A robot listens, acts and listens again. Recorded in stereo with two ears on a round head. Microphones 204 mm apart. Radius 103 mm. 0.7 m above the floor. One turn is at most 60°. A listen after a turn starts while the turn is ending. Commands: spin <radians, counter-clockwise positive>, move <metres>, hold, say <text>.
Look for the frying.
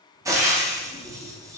spin -0.52
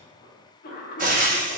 spin -1.05
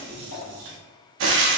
spin -1.05
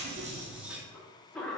spin -0.35
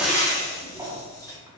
spin 0.26
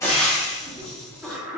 say Found it: frying, straight ahead, under 1 m away.